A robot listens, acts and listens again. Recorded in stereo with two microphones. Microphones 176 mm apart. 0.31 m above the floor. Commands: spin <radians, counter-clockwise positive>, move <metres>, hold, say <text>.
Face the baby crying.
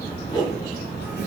hold
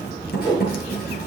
hold
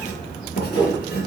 say I can't make out a baby crying, only a whoosh and writing.